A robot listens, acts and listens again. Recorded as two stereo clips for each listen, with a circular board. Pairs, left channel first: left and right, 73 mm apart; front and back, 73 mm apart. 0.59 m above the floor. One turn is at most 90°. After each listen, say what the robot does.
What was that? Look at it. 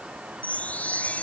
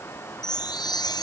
Turn 20° left.
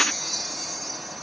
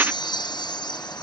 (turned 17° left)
Found it: a chime, straight ahead.